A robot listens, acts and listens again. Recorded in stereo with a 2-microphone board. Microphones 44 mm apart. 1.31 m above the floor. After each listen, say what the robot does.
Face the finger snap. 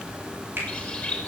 Turn 55° right.
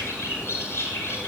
Keep listening.
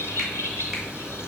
Keep listening.
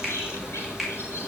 Facing the finger snap, over 4 m away.